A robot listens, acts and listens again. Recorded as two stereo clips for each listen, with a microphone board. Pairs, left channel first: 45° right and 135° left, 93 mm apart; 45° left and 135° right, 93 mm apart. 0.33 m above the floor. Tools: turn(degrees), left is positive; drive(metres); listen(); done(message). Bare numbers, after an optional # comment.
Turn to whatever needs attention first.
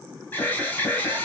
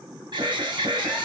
# The alarm: 115° right.
turn(-115)
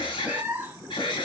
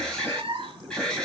# The alarm is now 35° right.
turn(-35)
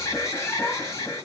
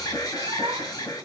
done("Found it: an alarm, straight ahead.")